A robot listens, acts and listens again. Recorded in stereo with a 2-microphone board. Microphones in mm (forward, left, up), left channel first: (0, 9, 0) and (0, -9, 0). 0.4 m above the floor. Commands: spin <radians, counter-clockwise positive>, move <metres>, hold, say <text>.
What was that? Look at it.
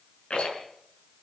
spin 1.22
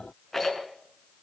say Facing the rattle.